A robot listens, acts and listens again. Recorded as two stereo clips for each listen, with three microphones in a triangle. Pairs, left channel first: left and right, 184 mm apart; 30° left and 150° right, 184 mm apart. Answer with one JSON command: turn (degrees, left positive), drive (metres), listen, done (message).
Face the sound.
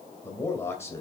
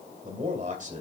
{"turn": 165}
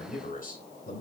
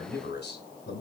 {"turn": 50}
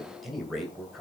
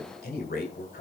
{"done": "Facing the man speaking."}